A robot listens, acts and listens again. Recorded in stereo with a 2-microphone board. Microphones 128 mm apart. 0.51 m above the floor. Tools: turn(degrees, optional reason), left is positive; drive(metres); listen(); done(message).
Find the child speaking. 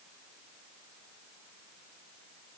listen()
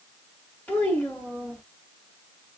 turn(degrees=30)
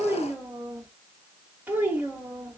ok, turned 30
turn(degrees=-15, reason="So it is at 15° right.")
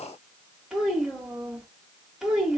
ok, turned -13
done("Found it: a child speaking, straight ahead.")